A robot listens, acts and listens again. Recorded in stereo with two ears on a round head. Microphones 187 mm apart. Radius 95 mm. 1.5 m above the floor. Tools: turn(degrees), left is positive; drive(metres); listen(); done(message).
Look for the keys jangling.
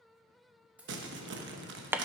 turn(degrees=-30)
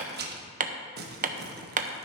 listen()
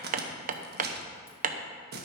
listen()
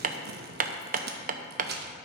done("I heard keys jangling, but can't make it out now. It was about 25° left or 145° right.")